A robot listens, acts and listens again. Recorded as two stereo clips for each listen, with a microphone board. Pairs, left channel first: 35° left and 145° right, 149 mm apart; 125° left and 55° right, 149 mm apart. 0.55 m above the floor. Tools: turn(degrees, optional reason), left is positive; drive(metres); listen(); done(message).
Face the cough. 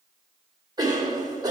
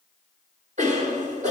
turn(degrees=-85, reason="The cough: 85° right.")
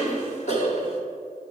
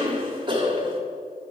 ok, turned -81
done("Found it: a cough, straight ahead.")